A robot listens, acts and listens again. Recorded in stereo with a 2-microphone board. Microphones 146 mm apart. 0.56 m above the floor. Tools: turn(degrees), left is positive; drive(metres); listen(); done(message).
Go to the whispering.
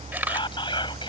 turn(degrees=35)
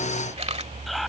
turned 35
drive(metres=1.0)
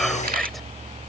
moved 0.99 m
listen()
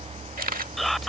drive(metres=1.0)
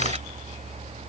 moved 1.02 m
listen()
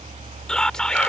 drive(metres=1.0)
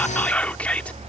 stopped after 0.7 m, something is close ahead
turn(degrees=15)
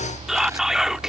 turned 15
done("Arrived at the whispering, straight ahead.")